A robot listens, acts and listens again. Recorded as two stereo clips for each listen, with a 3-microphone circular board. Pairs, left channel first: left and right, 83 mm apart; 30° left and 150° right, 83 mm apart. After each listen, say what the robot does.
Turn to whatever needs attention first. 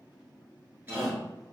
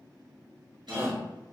Turn 95° right.
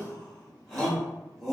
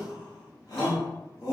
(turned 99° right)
Found it: a shout, straight ahead, 1 to 2 m away.